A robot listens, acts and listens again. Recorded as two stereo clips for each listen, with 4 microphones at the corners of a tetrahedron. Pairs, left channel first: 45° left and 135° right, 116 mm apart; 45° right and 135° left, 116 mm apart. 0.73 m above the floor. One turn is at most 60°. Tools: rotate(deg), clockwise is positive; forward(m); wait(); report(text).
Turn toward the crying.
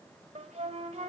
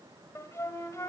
wait()
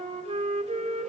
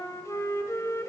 wait()
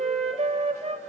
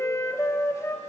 report("I can't make out crying to turn to.")